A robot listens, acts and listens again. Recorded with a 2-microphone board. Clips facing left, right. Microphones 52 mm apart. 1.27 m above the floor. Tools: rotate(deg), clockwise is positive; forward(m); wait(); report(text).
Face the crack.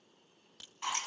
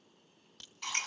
rotate(-30)
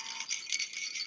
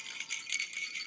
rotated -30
wait()
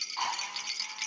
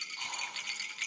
report("I heard a crack, but can't make it out now. It was about 25° right or 145° left.")